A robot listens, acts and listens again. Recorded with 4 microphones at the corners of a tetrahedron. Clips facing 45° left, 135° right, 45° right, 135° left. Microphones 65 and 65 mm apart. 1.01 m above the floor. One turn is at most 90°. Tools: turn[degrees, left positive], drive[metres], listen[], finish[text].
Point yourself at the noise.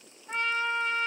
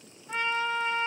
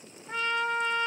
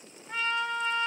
Action: finish[Facing the trumpet, under 1 m away.]